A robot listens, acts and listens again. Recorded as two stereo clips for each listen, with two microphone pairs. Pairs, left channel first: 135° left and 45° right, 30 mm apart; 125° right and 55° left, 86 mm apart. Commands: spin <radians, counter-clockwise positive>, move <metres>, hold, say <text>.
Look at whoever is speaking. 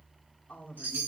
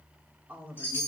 spin 2.09
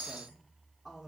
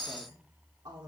spin 0.61
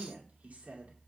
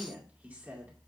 spin -0.26
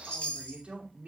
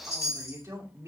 say Facing the woman speaking, 2 to 4 m away.